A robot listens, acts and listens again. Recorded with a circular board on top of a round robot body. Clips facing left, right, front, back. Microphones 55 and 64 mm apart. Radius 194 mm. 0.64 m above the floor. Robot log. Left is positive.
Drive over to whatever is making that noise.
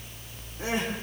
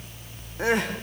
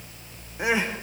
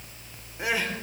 note: The crying: 70° right.
cmd yaw -70
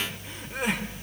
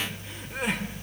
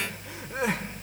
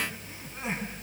cmd fwd 1.0
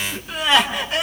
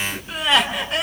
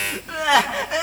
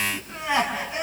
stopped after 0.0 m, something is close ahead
end: Blocked. The crying is further on, straight ahead.